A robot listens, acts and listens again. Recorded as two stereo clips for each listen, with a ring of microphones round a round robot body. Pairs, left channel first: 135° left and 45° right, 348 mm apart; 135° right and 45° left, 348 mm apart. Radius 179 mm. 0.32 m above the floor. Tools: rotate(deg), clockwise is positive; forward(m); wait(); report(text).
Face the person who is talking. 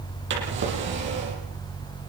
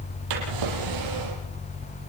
wait()
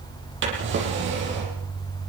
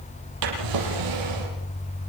wait()
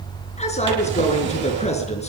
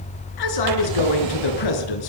rotate(155)
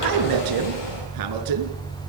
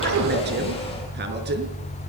rotate(15)
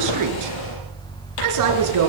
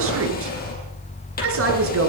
rotate(10)
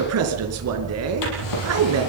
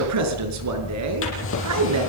report("Found it: a man speaking, straight ahead, over 4 m away.")